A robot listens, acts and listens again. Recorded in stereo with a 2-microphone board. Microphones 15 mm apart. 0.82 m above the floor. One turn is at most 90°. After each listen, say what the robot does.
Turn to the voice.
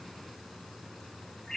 Keep listening.
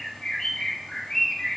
Keep listening.
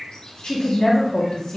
Turn 65° left.
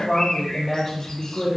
Turn 25° left.
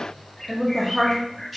Found it: a woman speaking, straight ahead, 1 to 2 m away.